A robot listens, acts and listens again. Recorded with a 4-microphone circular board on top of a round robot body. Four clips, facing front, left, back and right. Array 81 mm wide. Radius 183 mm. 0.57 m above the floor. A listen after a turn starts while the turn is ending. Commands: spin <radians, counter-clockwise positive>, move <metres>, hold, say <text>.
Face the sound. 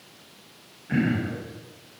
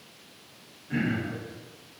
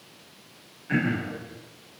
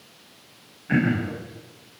spin -1.75
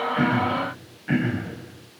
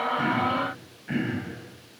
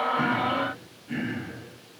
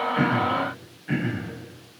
say Found it: throat clearing, straight ahead.